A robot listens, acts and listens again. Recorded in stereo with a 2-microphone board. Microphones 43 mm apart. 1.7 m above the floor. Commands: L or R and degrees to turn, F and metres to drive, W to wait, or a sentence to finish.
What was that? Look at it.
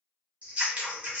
R30
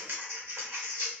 R120
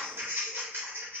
R50
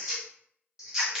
R10
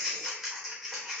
Found it: scissors, straight ahead.